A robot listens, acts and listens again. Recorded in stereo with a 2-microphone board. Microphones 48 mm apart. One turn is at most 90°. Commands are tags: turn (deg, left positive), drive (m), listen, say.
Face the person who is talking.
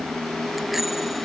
<listen/>
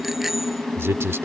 <turn deg="-60"/>
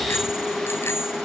<listen/>
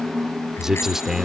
<turn deg="-10"/>
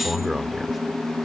<say>Facing the man speaking.</say>